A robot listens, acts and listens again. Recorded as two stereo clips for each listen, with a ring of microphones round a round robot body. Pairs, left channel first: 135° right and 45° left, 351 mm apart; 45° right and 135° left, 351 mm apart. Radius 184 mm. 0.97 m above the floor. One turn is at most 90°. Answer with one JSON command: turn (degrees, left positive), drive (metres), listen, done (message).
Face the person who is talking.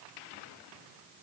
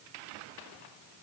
{"listen": true}
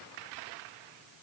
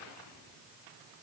{"listen": true}
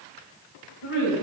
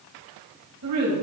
{"turn": -90}
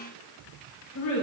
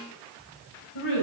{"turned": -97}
{"turn": -80}
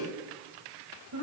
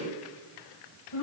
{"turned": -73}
{"done": "Found it: a woman speaking, straight ahead."}